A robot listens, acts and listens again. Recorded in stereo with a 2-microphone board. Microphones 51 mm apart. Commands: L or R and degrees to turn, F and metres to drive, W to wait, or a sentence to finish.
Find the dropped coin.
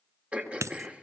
R90
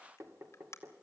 Facing where the dropped coin came from. I can't hear it now.